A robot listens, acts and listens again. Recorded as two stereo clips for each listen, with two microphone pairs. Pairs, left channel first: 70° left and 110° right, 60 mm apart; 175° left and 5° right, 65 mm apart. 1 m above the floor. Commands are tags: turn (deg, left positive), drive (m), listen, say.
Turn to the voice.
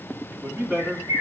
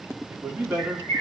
<turn deg="-65"/>
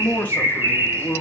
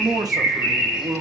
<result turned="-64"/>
<turn deg="10"/>
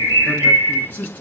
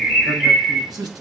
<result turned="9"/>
<turn deg="10"/>
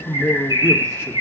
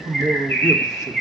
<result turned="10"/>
<say>Found it: a man speaking, straight ahead.</say>